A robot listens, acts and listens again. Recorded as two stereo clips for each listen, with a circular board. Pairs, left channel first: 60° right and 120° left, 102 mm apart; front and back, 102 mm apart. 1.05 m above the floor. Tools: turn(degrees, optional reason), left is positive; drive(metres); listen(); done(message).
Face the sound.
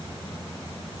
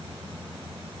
listen()
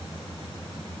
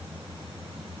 listen()
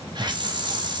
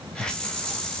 turn(degrees=80, reason="The hiss: 80° left.")
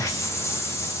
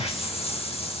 done("Found it: a hiss, straight ahead, under 1 m away.")